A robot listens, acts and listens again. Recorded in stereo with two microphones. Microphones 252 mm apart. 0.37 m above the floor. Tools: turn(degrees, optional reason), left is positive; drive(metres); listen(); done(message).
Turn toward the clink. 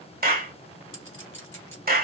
turn(degrees=55, reason="The clink: about 55° left or 125° left.")
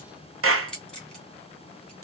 done("Facing the clink, 2 to 4 m away.")